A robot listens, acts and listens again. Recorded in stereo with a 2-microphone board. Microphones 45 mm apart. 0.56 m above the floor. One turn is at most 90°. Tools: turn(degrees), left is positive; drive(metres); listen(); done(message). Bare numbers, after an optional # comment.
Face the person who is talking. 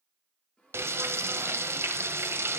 listen()
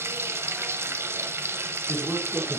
turn(-30)
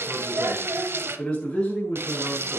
# So it is at 25° left.
turn(25)
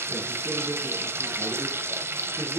# The man speaking is now 10° right.
turn(-10)
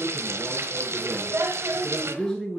done("Found it: a man speaking, straight ahead, over 4 m away.")